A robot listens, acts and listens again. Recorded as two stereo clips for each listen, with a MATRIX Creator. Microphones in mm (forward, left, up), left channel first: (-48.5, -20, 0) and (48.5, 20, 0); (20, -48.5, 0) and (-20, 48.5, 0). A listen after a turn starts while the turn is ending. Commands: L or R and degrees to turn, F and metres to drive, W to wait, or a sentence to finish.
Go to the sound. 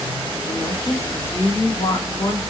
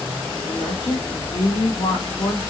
R110
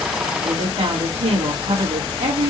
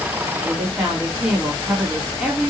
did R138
L30
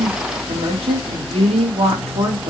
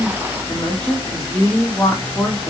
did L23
L10
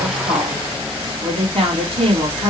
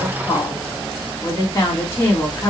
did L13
F1.0
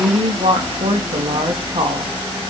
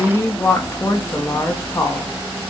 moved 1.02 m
F1.0
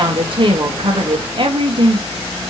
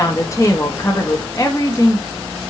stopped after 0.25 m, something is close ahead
R10
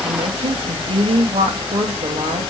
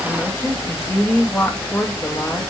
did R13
Arrived at the woman speaking, straight ahead.